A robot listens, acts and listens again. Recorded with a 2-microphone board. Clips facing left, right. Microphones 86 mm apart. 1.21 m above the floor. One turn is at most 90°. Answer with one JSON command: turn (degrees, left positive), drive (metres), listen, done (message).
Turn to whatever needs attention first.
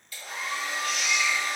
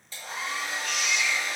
{"turn": 60}
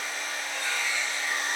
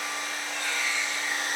{"turn": 10}
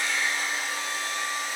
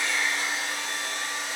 {"listen": true}
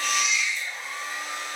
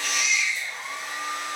{"done": "Facing the baby crying, 1 to 2 m away."}